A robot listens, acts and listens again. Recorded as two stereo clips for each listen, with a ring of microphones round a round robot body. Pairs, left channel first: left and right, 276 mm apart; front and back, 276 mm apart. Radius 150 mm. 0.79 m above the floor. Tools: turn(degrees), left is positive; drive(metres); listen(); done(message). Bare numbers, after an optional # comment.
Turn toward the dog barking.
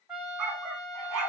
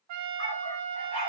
# The dog barking: 70° right.
turn(-70)
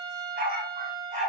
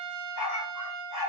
# The dog barking is now 25° right.
turn(-25)
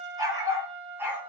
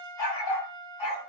done("Facing the dog barking.")